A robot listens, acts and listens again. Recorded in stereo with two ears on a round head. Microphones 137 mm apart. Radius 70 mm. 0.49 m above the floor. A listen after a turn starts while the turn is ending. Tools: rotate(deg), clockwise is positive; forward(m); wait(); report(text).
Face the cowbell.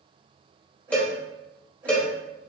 rotate(-30)
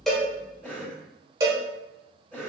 rotate(25)
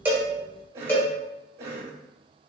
rotate(-15)
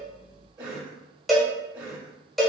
report("Facing the cowbell, 1 to 2 m away.")